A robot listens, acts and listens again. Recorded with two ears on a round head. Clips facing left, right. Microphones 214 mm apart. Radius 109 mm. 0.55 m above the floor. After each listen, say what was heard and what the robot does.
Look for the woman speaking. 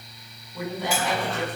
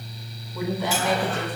Turn 90° right.
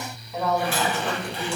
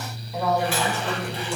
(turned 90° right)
Facing the woman speaking, over 4 m away.